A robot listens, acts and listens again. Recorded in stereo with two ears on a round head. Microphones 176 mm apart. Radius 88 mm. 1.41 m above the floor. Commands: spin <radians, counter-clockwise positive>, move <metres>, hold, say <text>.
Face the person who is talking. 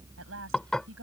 spin -1.22
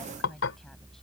hold
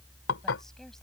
hold
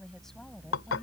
say Found it: a woman speaking, straight ahead.